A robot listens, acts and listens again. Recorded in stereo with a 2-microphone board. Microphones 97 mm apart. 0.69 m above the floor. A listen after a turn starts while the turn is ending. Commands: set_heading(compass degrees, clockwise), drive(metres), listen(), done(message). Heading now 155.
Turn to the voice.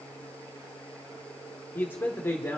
set_heading(130)
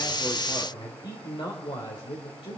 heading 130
set_heading(10)
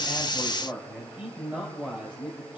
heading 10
set_heading(25)
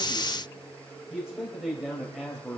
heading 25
done("Facing the man speaking.")